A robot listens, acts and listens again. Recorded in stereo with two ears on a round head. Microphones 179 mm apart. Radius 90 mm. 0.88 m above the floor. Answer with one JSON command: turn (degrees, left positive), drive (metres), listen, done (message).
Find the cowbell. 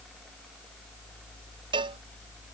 {"turn": -25}
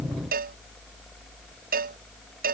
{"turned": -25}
{"turn": -130}
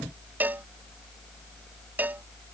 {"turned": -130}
{"turn": -10}
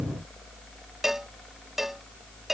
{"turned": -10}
{"done": "Facing the cowbell."}